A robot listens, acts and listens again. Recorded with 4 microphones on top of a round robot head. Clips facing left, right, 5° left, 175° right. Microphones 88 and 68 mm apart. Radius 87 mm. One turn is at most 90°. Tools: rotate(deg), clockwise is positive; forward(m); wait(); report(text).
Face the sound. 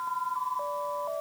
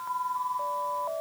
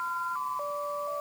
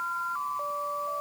wait()
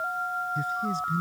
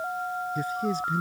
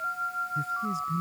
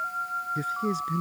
rotate(90)
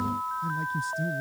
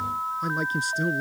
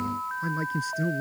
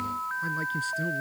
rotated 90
rotate(70)
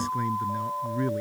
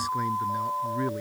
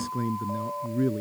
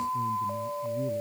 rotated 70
rotate(10)
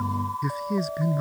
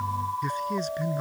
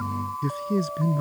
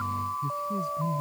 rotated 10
report("Facing the man speaking.")